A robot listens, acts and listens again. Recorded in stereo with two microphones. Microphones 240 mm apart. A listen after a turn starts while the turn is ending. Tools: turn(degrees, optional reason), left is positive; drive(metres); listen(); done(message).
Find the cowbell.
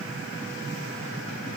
listen()
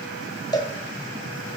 turn(degrees=15, reason="The cowbell: about 15° left or 165° left.")
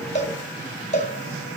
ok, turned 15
turn(degrees=150, reason="So it is at 150° left.")
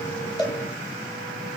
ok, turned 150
listen()
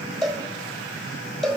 done("Found it: a cowbell, straight ahead, 1 to 2 m away.")